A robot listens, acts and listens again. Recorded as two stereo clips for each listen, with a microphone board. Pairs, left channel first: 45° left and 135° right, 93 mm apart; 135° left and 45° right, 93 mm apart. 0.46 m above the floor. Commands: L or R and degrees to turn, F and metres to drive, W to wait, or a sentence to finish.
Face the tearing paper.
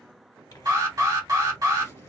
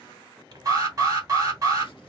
Found it: tearing paper, straight ahead, 1 to 2 m away.